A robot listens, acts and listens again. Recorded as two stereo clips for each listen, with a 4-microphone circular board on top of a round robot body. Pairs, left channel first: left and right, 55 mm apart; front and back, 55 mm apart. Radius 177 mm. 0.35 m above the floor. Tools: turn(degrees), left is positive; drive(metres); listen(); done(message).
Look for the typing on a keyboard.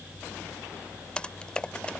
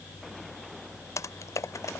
turn(degrees=20)
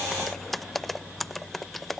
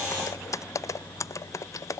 done("Facing the typing on a keyboard.")